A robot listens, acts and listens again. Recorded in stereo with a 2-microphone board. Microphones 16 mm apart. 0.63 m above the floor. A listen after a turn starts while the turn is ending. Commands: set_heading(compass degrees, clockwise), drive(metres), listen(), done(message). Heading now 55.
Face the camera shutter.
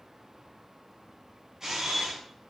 set_heading(85)
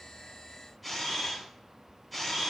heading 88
done("Found it: a camera shutter, straight ahead, over 4 m away.")